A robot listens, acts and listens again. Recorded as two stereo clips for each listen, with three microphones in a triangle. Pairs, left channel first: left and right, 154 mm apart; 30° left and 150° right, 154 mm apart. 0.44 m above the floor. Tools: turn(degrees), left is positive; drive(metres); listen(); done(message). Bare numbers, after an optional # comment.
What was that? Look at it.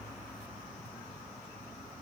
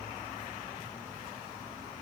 listen()
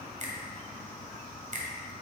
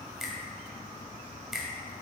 # The finger snap: 65° right.
turn(-65)
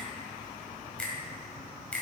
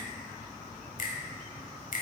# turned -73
# The finger snap is now 10° left.
turn(10)
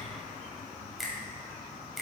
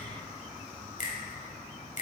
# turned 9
done("Facing the finger snap.")